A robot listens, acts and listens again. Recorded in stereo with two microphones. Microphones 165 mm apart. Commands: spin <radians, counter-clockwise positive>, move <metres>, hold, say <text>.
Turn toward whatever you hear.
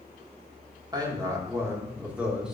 spin -0.52
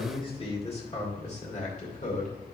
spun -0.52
spin 0.87
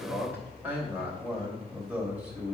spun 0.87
say Facing the man speaking.